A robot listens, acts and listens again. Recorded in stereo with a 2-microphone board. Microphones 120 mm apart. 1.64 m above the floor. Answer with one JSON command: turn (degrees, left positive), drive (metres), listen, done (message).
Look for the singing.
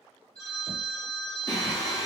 {"turn": 35}
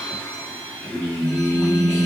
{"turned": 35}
{"turn": 15}
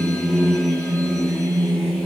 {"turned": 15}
{"turn": 10}
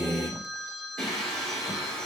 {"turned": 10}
{"done": "Facing the singing."}